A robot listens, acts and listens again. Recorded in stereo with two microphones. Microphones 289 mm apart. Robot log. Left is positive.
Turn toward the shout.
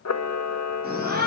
note: The shout: about 35° right or 145° right.
cmd yaw -35
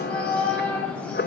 end: Found it: a shout, straight ahead, over 4 m away.